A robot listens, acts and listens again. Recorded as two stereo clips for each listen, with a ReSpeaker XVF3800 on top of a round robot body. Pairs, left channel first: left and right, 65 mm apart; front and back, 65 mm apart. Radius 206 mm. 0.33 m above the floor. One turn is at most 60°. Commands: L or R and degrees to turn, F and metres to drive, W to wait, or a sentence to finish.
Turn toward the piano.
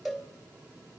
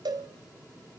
W
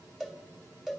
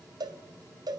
W
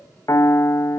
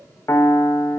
L45
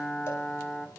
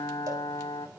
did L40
Facing the piano.